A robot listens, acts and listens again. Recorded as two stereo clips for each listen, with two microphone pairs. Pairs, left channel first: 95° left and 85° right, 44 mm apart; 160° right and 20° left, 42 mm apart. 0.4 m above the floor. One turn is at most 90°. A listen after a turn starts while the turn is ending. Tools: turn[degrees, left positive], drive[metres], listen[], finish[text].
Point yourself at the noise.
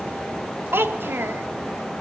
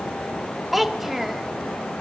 Thought: The child speaking: 65° right.
Action: turn[-65]
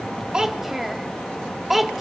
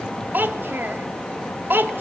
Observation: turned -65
Action: finish[Facing the child speaking.]